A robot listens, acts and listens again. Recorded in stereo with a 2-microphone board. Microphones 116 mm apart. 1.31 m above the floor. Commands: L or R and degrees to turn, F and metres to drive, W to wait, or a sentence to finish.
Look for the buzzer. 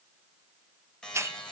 L30
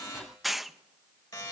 L145
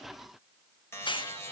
L25
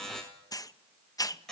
Facing the buzzer.